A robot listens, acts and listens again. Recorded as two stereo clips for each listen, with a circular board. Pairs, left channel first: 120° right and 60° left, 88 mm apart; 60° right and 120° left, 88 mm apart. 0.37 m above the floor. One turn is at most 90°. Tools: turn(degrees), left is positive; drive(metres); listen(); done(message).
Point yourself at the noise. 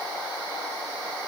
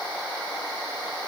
listen()
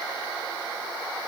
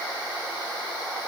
listen()
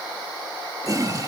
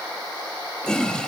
turn(degrees=20)
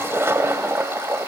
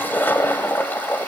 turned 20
done("Facing the toilet flushing.")